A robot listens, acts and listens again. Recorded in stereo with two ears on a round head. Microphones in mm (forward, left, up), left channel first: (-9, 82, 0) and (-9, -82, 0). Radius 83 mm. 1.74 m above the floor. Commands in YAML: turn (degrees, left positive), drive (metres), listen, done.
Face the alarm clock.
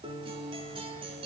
listen: true
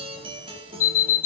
turn: 50
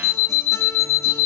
turn: 80
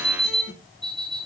done: "Found it: an alarm clock, straight ahead, 2 to 4 m away."